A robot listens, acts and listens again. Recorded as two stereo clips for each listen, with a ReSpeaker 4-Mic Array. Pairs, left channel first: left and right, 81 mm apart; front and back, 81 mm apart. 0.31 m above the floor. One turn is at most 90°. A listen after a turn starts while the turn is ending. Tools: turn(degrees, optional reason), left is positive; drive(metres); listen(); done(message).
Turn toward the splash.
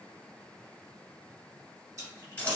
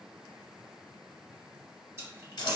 turn(degrees=-90, reason="The splash: 130° right.")
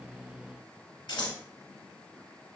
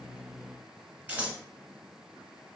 turn(degrees=-40, reason="Nothing new. It was at 40° right.")
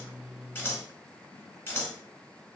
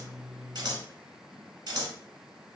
done("I heard a splash from this way, but can't make it out now.")